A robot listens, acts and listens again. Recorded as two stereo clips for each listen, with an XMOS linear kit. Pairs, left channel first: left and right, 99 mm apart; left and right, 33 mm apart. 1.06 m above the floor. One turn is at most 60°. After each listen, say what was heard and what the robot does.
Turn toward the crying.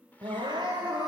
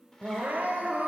The crying: about 45° right or 135° right. Turn 45° right.
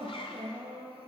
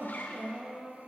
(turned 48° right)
So it is at 85° right. Turn 60° right.
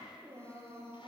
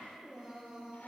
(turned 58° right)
The crying is now 25° right. Turn 25° right.
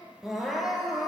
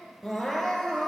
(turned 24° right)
Found it: crying, straight ahead, over 4 m away.